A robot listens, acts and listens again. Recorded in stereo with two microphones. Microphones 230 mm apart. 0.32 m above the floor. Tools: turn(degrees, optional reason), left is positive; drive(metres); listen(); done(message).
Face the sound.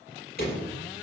turn(degrees=45, reason="The door slam: about 45° left or 135° left.")
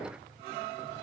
listen()
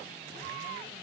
done("I heard a door slam, but can't make it out now. It was about straight ahead or 90° left.")